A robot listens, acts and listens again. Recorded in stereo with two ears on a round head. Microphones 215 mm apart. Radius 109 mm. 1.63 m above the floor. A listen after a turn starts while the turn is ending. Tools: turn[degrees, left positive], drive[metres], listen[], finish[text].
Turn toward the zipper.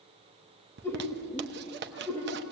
Thought: The zipper: about 50° right or 130° right.
Action: turn[-50]
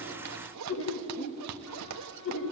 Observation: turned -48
Thought: So it is at 85° right.
Action: turn[-85]
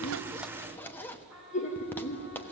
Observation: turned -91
Thought: The zipper is now 10° left.
Action: turn[10]
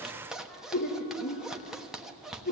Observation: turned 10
Action: finish[Facing the zipper, 1 to 2 m away.]